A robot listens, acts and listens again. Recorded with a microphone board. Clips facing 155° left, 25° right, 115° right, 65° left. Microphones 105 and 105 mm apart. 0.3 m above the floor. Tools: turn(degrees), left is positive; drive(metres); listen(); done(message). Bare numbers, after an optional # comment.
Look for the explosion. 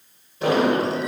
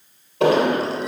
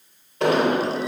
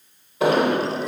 # The explosion: 15° right.
turn(-15)
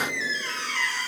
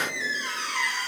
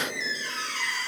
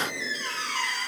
done("Facing where the explosion came from. I can't hear it now.")